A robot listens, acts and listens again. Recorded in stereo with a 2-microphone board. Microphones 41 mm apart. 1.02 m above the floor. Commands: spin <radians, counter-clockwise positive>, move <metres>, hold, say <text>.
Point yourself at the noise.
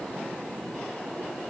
hold
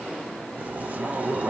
spin -0.70
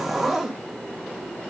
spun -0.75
say Facing the zipper.